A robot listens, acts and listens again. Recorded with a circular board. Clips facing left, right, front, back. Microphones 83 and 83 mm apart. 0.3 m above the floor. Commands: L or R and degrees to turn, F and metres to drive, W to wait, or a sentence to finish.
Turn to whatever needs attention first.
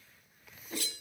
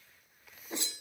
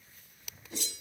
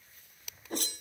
W
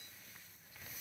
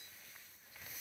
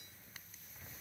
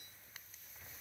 W
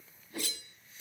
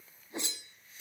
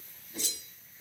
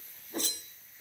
I can't make out anything urgent, only a whoosh.